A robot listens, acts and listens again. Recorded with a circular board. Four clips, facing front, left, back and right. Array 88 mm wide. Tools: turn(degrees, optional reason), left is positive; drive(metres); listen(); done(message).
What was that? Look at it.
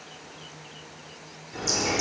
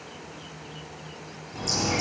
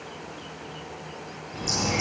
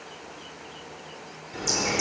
turn(degrees=-35, reason="The bird: 35° right.")
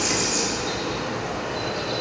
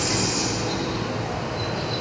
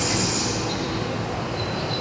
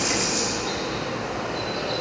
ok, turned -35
turn(degrees=-15, reason="The bird is now 15° right.")
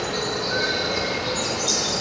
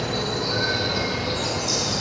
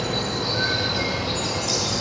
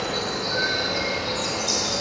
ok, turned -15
done("Facing the bird, over 4 m away.")